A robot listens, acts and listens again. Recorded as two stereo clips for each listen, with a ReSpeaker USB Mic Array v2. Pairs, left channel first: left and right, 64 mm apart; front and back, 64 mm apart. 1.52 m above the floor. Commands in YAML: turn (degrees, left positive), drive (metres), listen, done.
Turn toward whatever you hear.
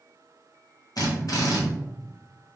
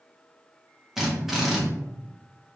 turn: 95
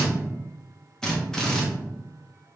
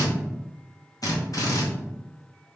turn: 10
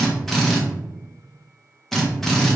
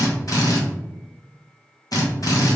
done: "Facing the drill."